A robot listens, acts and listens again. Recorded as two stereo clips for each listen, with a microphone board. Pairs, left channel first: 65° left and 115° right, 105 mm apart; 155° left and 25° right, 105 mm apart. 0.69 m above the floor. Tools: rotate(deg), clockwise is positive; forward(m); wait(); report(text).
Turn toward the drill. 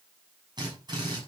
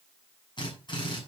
rotate(160)
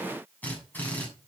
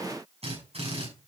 report("Found it: a drill, straight ahead.")